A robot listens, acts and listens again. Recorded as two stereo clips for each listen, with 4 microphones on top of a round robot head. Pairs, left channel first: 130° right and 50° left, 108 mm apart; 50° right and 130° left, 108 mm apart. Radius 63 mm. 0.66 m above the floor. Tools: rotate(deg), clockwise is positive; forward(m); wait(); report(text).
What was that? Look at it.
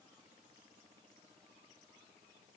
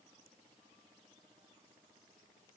wait()
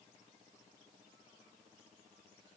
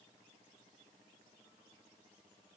wait()
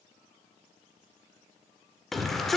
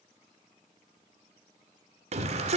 rotate(-145)
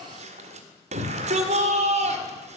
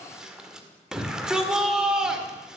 rotate(-45)
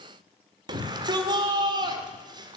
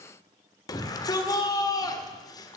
report("Facing the shout.")